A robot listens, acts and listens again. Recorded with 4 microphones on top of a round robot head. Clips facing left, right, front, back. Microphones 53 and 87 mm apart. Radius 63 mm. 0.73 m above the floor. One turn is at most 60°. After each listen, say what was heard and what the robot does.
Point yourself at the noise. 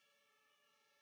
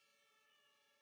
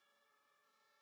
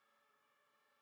Keep listening.
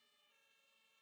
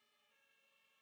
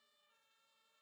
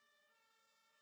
Keep listening.
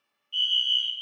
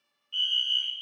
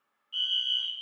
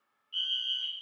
The fire alarm: 45° right. Turn 45° right.
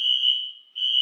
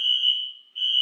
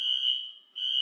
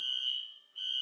The fire alarm is now 15° right. Turn 15° right.
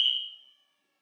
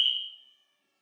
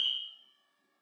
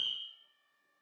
Facing the fire alarm, 2 to 4 m away.